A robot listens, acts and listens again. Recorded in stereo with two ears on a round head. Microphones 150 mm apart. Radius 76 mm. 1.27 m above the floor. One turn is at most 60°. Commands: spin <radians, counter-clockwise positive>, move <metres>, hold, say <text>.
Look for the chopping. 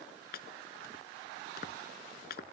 spin 1.05
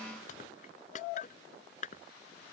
spin 0.87
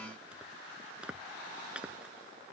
say Found it: chopping, straight ahead.